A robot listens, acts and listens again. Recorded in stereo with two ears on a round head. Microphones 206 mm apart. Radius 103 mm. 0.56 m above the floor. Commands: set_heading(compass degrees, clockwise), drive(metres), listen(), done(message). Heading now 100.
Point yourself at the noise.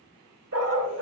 set_heading(155)
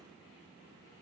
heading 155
listen()
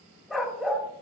done("Found it: a dog barking, straight ahead.")